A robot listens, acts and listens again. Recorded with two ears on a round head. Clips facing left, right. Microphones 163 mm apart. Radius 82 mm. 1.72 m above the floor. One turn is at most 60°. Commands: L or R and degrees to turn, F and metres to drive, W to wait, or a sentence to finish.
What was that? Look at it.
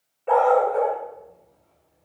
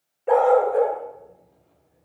R15
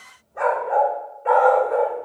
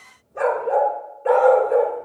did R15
R60
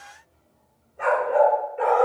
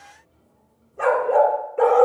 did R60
R60
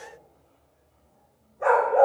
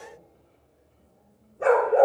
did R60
R50
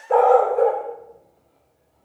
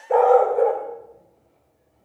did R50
R10
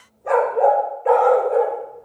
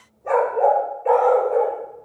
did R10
Found it: a dog barking, straight ahead, 2 to 4 m away.